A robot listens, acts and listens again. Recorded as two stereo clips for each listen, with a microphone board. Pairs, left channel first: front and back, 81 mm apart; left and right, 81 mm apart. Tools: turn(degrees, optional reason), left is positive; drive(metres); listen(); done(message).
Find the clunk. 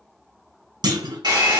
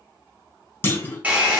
turn(degrees=150, reason="The clunk: 150° left.")
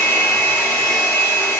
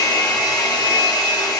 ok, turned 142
turn(degrees=10, reason="Nothing new. It was at 10° left.")
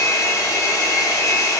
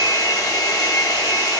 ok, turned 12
done("I heard a clunk from this way, but can't make it out now.")